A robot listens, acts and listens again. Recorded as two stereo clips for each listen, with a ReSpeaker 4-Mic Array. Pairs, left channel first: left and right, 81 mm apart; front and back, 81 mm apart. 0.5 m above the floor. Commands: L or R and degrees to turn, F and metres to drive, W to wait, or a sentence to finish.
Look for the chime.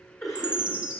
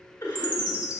R165
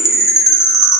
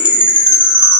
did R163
Facing the chime, under 1 m away.